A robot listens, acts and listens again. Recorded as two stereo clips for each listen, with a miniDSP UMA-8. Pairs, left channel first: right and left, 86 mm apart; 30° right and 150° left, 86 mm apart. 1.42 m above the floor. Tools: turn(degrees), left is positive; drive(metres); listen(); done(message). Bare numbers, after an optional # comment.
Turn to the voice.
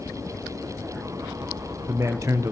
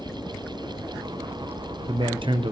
# The man speaking: 145° left.
turn(145)
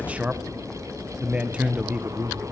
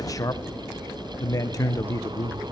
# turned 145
# The man speaking is now 15° left.
turn(15)
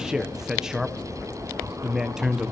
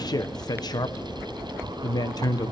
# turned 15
done("Found it: a man speaking, straight ahead, 1 to 2 m away.")